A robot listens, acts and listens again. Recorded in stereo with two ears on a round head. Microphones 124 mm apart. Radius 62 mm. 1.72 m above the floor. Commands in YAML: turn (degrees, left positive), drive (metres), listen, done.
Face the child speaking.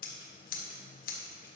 listen: true
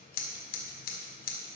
listen: true
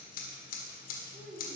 turn: -55
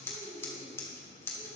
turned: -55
turn: 15
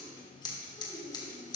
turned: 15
turn: 15
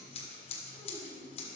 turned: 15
done: "Facing the child speaking."